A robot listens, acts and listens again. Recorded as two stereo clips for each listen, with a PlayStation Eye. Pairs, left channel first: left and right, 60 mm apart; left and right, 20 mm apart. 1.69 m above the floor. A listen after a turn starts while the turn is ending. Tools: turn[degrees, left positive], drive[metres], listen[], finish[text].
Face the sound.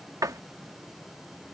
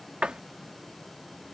Thought: The door slam: about 75° right or 105° right.
Action: turn[-75]
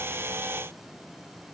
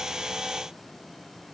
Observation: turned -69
Action: listen[]
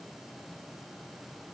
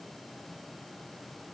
Action: finish[I heard a door slam, but can't make it out now. It was about 5° right or 35° right.]